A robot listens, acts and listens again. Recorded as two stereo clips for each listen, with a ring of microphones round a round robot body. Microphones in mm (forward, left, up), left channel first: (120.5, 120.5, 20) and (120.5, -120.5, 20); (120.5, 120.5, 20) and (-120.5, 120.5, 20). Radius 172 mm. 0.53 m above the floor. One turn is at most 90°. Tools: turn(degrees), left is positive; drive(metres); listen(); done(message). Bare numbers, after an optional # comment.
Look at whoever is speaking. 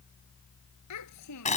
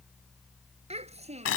# The child speaking: 115° left.
turn(90)
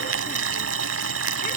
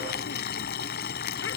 # Nothing new. It was at 25° left.
turn(25)
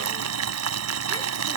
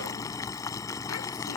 listen()
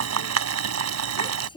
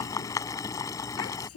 # The child speaking is now 20° left.
turn(20)
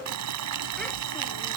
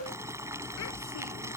listen()
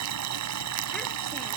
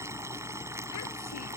listen()
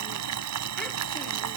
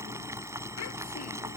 done("Facing where the child speaking came from. I can't hear it now.")